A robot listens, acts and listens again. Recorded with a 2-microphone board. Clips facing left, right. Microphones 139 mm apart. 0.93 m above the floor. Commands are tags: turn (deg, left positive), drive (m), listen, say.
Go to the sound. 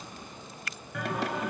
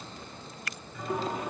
<turn deg="90"/>
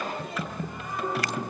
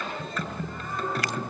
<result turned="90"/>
<turn deg="10"/>
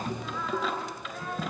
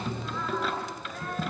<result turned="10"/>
<drive m="1.0"/>
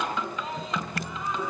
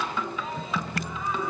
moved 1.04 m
<drive m="1.0"/>
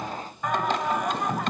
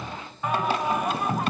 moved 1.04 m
<turn deg="-10"/>
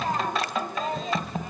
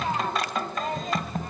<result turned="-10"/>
<drive m="1.0"/>
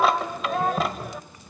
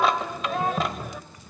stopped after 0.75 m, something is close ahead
<say>I am next to the singing.</say>